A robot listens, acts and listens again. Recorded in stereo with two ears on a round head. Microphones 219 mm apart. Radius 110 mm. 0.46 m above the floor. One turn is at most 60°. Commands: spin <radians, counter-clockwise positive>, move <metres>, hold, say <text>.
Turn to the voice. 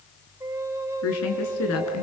spin 1.05
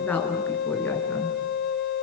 say Found it: a woman speaking, straight ahead, over 4 m away.